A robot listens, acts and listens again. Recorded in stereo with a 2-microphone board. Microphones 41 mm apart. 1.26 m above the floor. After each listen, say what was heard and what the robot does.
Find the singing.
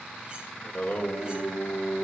The singing: about 55° left or 125° left. Turn 55° left.
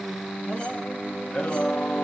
So it is at 45° left. Turn 45° left.
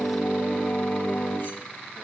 The singing is now 45° left. Turn 45° left.
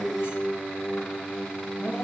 The singing is now 35° left. Turn 35° left.
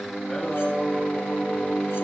The singing is now 15° left. Turn 15° left.
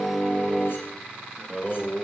Facing the singing, 2 to 4 m away.